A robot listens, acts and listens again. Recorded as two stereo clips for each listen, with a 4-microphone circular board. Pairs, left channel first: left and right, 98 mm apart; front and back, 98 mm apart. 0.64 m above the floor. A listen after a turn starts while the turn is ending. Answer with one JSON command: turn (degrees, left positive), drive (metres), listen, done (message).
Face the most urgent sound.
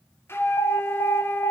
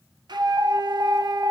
{"turn": 120}
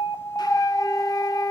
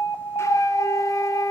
{"listen": true}
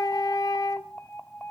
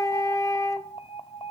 {"turn": 15}
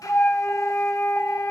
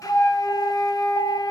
{"listen": true}
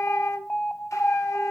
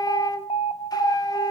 {"done": "Facing the alarm."}